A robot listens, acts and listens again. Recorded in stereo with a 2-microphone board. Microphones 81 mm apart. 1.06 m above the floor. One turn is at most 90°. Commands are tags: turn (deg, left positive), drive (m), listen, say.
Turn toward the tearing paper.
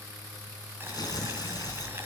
<turn deg="50"/>
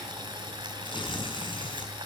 <turn deg="80"/>
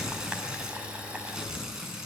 <say>Facing the tearing paper.</say>